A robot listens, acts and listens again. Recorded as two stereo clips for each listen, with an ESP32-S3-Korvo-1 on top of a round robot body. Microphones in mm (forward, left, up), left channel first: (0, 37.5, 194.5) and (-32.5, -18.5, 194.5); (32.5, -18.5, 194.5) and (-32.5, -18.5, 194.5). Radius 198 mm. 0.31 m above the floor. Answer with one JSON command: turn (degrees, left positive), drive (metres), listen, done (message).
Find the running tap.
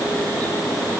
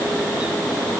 {"listen": true}
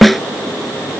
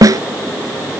{"listen": true}
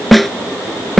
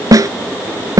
{"done": "I can't make out a running tap, only a snare drum."}